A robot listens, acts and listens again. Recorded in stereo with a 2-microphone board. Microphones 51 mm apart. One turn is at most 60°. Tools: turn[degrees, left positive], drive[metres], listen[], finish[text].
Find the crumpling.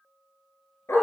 Action: listen[]
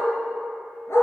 Action: listen[]
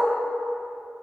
Action: finish[I can't make out crumpling to turn to.]